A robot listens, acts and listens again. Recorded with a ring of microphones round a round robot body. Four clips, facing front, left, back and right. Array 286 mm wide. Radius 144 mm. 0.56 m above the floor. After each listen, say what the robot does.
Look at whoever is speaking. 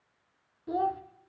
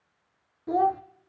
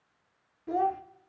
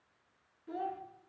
Turn 100° left.
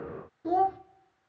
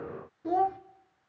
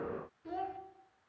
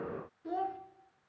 Turn 35° left.
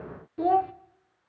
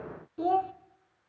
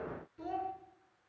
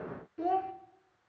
Turn 10° left.
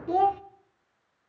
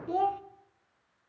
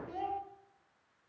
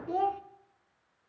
Facing the child speaking.